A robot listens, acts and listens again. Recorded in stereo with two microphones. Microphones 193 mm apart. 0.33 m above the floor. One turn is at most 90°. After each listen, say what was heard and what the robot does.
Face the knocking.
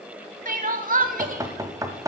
The knocking: about 20° right or 160° right. Turn 20° right.
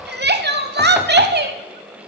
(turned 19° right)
Keep listening.
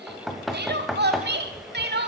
Facing the knocking, 1 to 2 m away.